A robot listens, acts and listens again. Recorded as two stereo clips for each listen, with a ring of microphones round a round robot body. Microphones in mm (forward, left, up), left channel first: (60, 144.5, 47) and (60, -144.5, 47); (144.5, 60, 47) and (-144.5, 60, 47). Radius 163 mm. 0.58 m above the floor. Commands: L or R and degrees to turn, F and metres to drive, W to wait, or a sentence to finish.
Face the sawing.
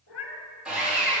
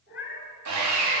R175
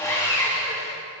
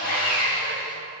L15
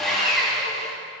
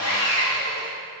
Facing the sawing.